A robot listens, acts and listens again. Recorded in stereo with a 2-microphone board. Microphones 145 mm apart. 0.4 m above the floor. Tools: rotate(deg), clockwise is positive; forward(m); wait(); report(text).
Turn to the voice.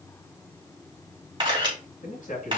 rotate(-65)
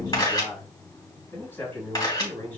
rotate(-15)
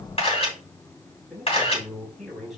report("Found it: a man speaking, straight ahead, 2 to 4 m away.")